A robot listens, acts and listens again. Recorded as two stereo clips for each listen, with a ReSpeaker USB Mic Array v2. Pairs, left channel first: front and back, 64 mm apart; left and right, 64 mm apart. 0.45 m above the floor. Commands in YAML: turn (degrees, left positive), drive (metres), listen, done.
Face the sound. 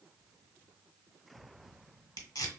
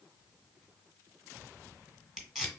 done: "Facing the tape being pulled."